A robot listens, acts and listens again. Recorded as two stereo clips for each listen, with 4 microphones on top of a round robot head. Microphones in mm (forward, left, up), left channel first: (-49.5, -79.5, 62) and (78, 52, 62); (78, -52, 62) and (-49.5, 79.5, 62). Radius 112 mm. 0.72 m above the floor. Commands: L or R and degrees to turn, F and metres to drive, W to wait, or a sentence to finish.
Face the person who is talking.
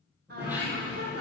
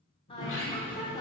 L20
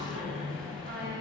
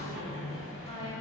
W
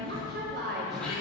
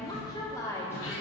L30
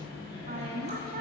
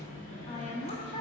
L10
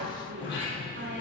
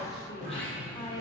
L25
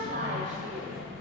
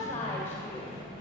Facing the woman speaking.